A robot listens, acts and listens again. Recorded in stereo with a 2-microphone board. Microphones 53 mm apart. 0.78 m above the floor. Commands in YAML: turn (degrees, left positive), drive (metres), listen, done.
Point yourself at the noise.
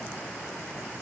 listen: true
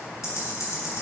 turn: 90
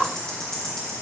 turn: 10
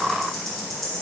done: "Facing the ticking, 2 to 4 m away."